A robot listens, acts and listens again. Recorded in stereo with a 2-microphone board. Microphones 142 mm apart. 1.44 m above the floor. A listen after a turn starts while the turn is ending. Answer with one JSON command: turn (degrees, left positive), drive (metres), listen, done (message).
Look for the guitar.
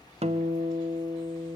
{"turn": -45}
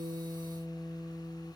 {"done": "Facing the guitar."}